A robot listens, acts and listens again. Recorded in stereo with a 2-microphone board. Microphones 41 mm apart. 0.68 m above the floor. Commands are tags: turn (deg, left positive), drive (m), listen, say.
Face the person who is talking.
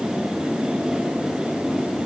<listen/>
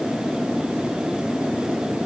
<listen/>
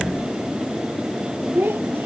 <turn deg="-65"/>
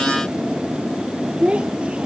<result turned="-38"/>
<turn deg="-30"/>
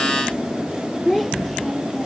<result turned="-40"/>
<turn deg="10"/>
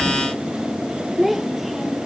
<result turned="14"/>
<say>Found it: a child speaking, straight ahead.</say>